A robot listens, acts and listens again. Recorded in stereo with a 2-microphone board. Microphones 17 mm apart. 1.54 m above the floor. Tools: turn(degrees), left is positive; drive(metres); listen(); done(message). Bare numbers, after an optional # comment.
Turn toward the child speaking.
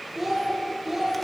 # The child speaking: about 30° right or 150° right.
turn(-30)
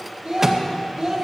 # So it is at 125° right.
turn(-125)
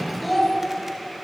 done("Found it: a child speaking, straight ahead.")